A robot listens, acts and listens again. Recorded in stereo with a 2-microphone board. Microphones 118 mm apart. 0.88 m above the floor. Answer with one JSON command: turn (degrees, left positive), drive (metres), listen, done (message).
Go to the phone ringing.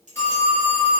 {"turn": 20}
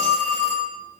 {"drive": 1.0}
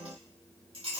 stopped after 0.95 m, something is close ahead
{"listen": true}
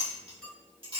{"listen": true}
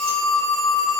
{"done": "I am next to the phone ringing."}